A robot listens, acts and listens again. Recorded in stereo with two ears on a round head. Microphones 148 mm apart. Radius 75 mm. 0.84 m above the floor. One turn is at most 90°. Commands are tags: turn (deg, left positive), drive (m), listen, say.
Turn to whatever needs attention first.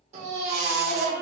<turn deg="-40"/>
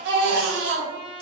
<turn deg="-90"/>
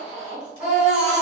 <say>Found it: a baby crying, straight ahead.</say>